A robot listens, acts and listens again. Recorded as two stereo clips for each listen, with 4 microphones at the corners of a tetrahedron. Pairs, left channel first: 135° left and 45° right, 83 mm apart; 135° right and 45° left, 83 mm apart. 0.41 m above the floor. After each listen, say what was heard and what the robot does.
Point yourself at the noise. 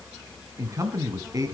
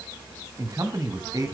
Found it: a man speaking, straight ahead.